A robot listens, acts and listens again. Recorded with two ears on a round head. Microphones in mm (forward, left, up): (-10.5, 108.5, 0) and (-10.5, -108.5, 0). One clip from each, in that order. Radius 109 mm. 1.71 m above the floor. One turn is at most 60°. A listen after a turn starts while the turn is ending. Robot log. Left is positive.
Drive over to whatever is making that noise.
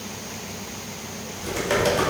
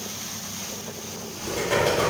note: The typing on a keyboard: about 55° left or 125° left.
cmd yaw +55
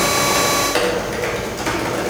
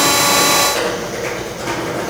note: So it is at 65° left.
cmd yaw +60
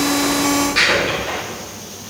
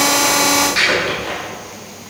note: The typing on a keyboard is now 10° right.
cmd yaw -10
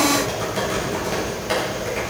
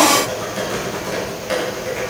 cmd fwd 1.0
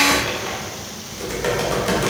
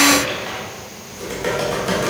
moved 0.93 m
note: The typing on a keyboard is now 10° left.
cmd yaw +10
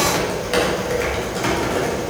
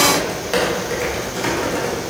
cmd fwd 1.0
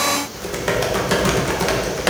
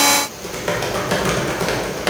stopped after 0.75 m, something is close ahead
note: The typing on a keyboard is now 10° left.
cmd yaw +10
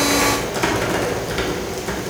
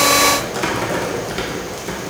end: Arrived at the typing on a keyboard, straight ahead.